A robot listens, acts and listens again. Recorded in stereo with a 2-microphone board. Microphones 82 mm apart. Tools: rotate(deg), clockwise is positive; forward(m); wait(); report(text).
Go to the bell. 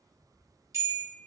rotate(40)
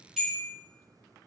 forward(1.0)
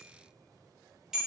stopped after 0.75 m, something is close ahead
rotate(10)
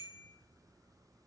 wait()
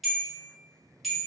report("Arrived at the bell, straight ahead.")